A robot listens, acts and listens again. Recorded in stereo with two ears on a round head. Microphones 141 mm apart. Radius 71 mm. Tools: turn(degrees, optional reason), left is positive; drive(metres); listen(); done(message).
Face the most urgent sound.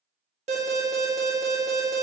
turn(degrees=-40, reason="The alarm: about 40° right or 140° right.")
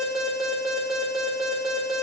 done("Found it: an alarm, straight ahead, 1 to 2 m away.")